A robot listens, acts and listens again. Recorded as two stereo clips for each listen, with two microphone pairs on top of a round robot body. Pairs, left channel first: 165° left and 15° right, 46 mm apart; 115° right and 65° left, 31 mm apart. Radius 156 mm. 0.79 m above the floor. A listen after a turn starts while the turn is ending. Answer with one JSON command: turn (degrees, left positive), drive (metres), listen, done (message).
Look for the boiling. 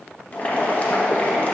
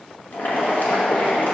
{"turn": -140}
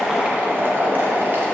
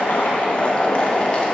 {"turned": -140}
{"turn": -55}
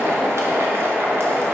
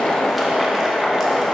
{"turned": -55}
{"done": "Found it: boiling, straight ahead, 1 to 2 m away."}